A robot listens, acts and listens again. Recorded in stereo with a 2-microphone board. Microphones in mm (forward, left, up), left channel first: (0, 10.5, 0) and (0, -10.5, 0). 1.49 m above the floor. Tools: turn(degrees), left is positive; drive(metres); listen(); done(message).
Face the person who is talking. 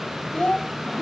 turn(degrees=70)
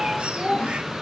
turn(degrees=40)
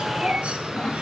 listen()
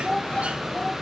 turn(degrees=15)
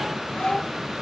listen()
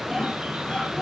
listen()
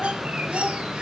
done("Found it: a child speaking, straight ahead.")